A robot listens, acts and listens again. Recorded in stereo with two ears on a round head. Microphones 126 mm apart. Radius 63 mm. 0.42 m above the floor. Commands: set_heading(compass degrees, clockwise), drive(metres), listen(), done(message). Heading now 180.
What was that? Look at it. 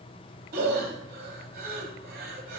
set_heading(250)
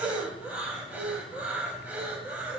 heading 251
set_heading(261)
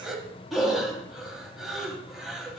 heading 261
done("Facing the breathing.")